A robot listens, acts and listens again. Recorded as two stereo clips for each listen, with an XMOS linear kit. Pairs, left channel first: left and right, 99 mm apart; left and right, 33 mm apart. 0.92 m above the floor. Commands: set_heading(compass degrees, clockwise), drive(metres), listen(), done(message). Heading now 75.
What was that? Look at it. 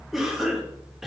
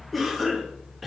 set_heading(105)
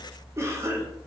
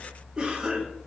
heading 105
set_heading(255)
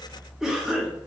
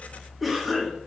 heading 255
done("Facing the cough.")